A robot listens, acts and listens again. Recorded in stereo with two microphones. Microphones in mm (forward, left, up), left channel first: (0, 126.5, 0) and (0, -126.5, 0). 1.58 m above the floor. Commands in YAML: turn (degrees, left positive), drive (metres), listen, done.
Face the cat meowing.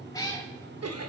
turn: 30
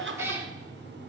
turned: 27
turn: -10
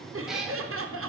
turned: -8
done: "Found it: a cat meowing, straight ahead, 1 to 2 m away."